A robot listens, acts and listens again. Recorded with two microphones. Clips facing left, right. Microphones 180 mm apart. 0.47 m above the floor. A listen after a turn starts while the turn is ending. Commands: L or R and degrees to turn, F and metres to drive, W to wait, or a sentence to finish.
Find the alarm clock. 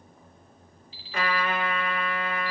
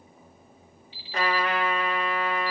L35
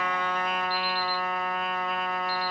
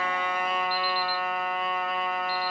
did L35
W
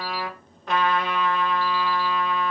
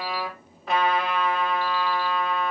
W
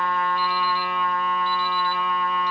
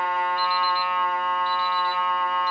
I heard an alarm clock, but can't make it out now. It was about straight ahead or 110° left.